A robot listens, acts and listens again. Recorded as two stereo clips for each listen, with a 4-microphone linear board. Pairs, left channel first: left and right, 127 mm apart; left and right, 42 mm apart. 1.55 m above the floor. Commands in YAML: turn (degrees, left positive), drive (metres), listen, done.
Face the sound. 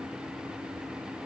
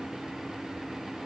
listen: true
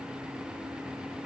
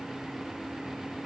listen: true
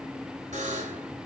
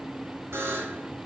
turn: -70
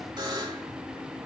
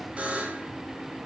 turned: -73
turn: -35
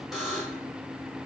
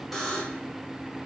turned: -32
done: "Facing the buzzer."